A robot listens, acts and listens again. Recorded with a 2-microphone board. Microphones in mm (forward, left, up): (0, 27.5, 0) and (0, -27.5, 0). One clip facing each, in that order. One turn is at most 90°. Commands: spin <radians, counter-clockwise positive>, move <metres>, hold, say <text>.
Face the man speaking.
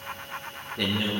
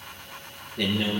spin 0.52
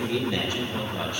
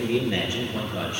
spin -0.35
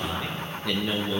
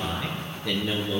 say Found it: a man speaking, straight ahead, over 4 m away.